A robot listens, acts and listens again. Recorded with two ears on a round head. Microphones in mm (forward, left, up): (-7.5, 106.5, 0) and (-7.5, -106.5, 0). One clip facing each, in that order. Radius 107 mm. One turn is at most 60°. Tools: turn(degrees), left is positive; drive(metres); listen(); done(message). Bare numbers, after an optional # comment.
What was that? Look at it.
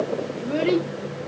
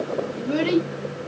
# The child speaking: about 55° right or 125° right.
turn(-55)
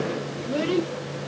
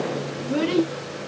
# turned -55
# So it is at 50° right.
turn(-50)
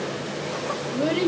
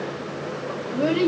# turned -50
done("Facing the child speaking.")